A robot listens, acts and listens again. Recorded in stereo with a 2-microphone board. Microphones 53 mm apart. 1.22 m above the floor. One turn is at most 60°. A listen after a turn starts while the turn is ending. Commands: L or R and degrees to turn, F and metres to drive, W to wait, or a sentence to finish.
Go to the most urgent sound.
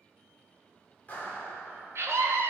R55
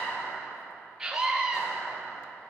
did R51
F1.0
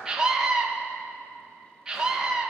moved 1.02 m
R10
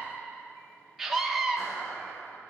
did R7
F1.0
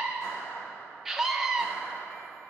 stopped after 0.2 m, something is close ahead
I am next to the scream.